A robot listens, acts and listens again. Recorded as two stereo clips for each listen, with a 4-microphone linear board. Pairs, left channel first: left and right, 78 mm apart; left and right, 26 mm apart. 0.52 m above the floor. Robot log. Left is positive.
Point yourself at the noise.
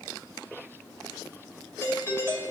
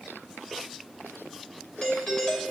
note: The doorbell: about 30° left or 150° left.
cmd yaw +30
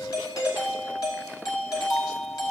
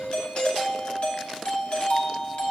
note: So it is at 115° left.
cmd yaw +115
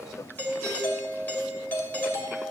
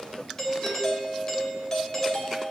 note: The doorbell is now 30° left.
cmd yaw +30
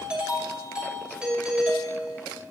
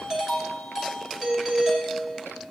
note: The doorbell is now 15° right.
cmd yaw -15
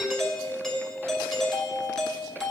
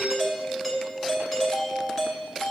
end: Facing the doorbell, 2 to 4 m away.